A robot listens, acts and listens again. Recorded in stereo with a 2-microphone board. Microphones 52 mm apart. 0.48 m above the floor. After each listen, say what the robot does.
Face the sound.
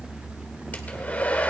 Turn 35° left.
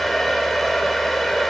Facing the hair dryer, 1 to 2 m away.